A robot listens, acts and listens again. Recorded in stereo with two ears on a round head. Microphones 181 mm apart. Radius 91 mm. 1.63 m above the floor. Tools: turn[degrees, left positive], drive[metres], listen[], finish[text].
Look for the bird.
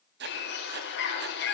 Thought: The bird: about 55° left or 125° left.
Action: turn[55]
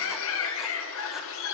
Thought: So it is at 65° left.
Action: turn[65]
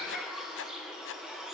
Action: finish[Facing the bird.]